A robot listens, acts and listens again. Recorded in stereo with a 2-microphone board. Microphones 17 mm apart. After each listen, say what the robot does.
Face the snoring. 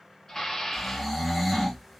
Turn 30° left.
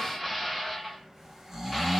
Turn 30° right.
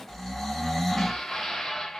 Turn 15° left.
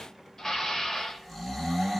Found it: snoring, straight ahead, 1 to 2 m away.